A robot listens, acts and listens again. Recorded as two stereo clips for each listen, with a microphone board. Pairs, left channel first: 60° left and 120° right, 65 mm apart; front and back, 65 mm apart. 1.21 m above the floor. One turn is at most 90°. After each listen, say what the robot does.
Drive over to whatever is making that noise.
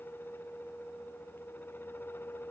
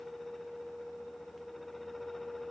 Keep listening.
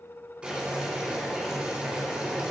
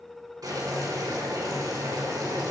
Turn 90° left.
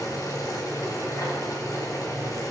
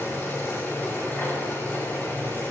Turn 55° left.
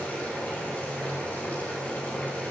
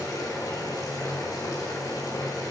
Drive 1.0 m forward.
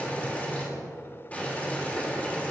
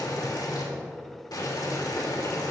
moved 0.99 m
Drive 1.0 m forward.
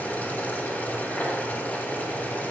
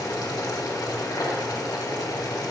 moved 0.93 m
Drive 1.0 m forward.
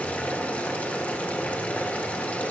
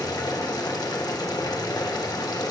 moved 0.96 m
Drive 1.0 m forward.
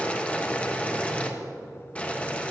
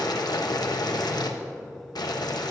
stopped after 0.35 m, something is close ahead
Turn 10° right.
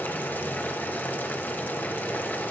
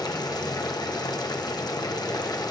Arrived at the boiling, straight ahead.